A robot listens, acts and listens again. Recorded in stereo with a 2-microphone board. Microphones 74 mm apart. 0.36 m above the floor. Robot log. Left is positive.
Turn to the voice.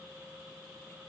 cmd idle
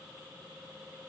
cmd idle
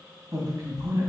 note: The man speaking: about 40° right or 140° right.
cmd yaw -40
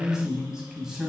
end: Facing the man speaking, 2 to 4 m away.